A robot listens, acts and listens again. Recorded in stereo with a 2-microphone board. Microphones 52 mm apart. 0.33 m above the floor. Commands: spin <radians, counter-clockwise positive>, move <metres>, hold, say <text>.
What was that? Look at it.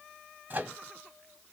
spin -0.61
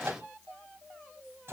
spin -1.75
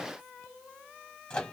spin 0.26
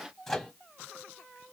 say Facing the microwave, 1 to 2 m away.